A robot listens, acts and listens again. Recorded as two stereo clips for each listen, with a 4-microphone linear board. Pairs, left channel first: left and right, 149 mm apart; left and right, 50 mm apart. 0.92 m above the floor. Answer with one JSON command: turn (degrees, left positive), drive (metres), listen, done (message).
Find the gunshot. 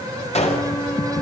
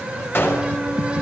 {"turn": 45}
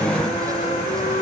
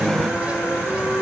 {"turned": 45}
{"listen": true}
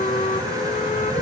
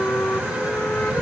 {"done": "I heard a gunshot, but can't make it out now. It was about straight ahead or 90° left."}